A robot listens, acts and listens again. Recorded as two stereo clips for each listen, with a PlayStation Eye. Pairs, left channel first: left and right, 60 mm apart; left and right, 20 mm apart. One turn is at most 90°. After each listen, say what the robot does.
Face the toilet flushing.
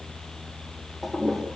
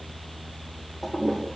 Turn 30° right.
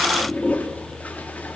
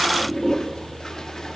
Turn 25° left.
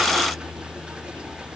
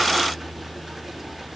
Keep listening.
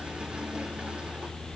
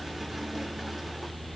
Keep listening.
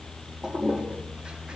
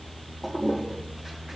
Turn 15° right.
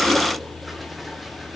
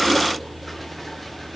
Keep listening.
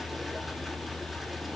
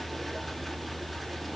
Keep listening.
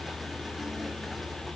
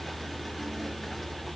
Facing where the toilet flushing came from. I can't hear it now.